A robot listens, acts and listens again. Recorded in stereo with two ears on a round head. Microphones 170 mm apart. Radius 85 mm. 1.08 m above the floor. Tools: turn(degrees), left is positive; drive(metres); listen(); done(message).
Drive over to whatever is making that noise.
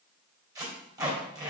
turn(degrees=-20)
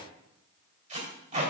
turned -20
turn(degrees=-140)
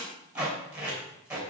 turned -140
drive(metres=1.0)
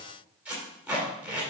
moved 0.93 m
drive(metres=1.0)
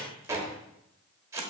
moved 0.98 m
turn(degrees=-15)
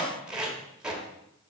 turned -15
drive(metres=1.0)
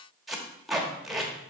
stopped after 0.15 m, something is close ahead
done("I am next to the tape being pulled.")